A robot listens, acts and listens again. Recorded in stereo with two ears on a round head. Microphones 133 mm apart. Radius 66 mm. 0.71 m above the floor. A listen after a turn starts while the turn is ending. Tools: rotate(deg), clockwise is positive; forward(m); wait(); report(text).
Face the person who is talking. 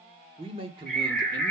rotate(35)
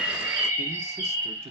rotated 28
rotate(40)
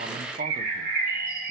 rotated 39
wait()
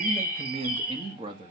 rotate(30)
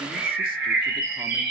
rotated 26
wait()
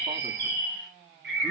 wait()
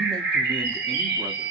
report("I heard a man speaking, but can't make it out now. It was about straight ahead or 125° right.")